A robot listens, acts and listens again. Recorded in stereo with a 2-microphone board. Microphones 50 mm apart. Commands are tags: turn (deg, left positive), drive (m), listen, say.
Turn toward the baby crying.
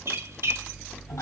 <listen/>
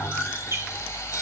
<listen/>
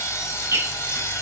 <say>I can't make out a baby crying, only sawing and a squeak.</say>